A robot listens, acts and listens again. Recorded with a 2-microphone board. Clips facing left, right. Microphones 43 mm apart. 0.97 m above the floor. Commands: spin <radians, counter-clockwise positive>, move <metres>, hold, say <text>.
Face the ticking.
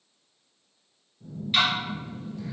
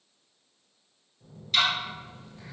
spin 0.35
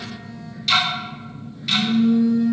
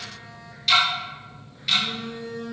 say Facing the ticking, under 1 m away.